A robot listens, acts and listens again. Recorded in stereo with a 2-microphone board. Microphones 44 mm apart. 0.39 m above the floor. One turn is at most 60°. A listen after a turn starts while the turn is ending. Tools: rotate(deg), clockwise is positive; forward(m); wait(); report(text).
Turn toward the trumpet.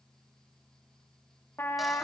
rotate(-60)
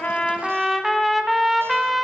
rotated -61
report("Facing the trumpet, 1 to 2 m away.")